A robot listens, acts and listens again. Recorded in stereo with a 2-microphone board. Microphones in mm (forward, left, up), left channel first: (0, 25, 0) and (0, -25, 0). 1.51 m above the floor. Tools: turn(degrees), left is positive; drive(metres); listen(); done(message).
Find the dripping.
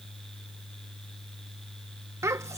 listen()
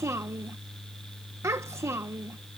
listen()
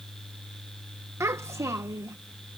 done("I can't make out dripping, only a child speaking.")